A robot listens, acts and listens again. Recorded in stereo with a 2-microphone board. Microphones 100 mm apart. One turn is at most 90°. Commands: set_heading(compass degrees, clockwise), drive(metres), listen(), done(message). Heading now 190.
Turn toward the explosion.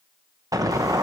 set_heading(225)
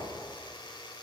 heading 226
listen()
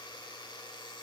done("I heard an explosion, but can't make it out now. It was about straight ahead or 110° right.")